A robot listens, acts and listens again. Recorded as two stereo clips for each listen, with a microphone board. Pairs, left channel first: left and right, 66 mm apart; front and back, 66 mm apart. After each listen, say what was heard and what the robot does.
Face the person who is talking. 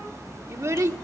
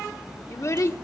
The child speaking: 45° right. Turn 45° right.
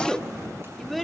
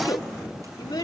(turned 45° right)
Found it: a child speaking, straight ahead, 1 to 2 m away.